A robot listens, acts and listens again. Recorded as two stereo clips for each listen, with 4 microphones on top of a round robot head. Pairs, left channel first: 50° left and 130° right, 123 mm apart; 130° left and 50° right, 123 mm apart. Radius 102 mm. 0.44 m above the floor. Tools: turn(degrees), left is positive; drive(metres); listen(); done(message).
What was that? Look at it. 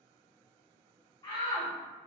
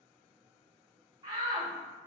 done("Facing the shout, 1 to 2 m away.")